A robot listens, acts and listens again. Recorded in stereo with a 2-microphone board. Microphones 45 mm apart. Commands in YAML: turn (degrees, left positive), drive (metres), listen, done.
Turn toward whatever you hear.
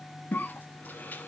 turn: 45
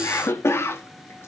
turn: 90
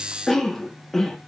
turn: 10
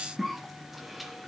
done: "Found it: a cough, straight ahead, 1 to 2 m away."